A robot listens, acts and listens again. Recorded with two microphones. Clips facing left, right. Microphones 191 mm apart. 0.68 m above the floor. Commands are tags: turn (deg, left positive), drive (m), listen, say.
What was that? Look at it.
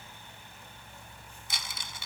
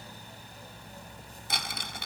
<turn deg="-60"/>
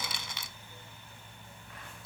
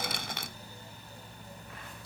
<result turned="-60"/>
<turn deg="-55"/>
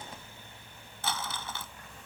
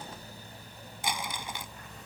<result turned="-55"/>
<turn deg="-15"/>
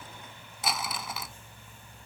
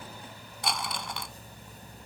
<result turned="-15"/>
<say>Facing the crumpling.</say>